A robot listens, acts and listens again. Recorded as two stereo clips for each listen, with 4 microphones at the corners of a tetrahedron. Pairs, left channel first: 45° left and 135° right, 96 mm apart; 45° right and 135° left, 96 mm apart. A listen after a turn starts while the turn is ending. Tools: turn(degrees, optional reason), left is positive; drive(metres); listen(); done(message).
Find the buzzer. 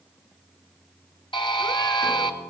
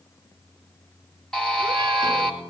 turn(degrees=35, reason="The buzzer: 35° left.")
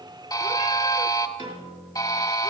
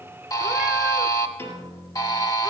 done("Found it: a buzzer, straight ahead, 1 to 2 m away.")